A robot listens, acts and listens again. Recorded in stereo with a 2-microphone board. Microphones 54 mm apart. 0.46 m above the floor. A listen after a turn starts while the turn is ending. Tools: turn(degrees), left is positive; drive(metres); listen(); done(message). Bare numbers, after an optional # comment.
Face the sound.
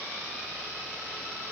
listen()
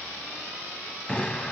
# The explosion: about 20° left or 160° left.
turn(20)
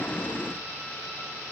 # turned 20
listen()
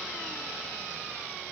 done("I heard an explosion, but can't make it out now. It was about straight ahead or 140° left.")